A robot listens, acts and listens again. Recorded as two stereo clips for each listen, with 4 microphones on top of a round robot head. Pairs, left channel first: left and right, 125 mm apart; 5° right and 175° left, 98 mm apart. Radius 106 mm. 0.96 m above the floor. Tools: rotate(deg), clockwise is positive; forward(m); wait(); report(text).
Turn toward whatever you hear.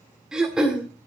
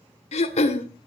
report("Facing the throat clearing, 1 to 2 m away.")